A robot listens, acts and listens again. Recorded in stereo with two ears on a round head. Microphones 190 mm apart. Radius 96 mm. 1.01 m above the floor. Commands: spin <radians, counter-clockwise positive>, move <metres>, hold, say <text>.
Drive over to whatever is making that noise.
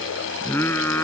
spin 0.52
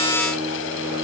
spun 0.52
hold
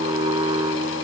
spin -0.35
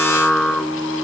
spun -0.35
move 1.0
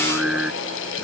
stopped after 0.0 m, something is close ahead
say Something is in my way. I am facing the singing but have not reached it.